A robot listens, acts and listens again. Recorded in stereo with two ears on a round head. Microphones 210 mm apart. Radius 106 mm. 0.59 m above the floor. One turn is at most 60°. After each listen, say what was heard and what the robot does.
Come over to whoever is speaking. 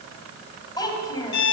The child speaking: about 15° left or 165° left. Turn 15° left.
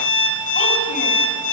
Keep listening.
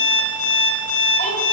Keep listening.
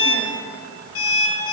I heard a child speaking, but can't make it out now. It was about straight ahead or 150° left. I did not reach it.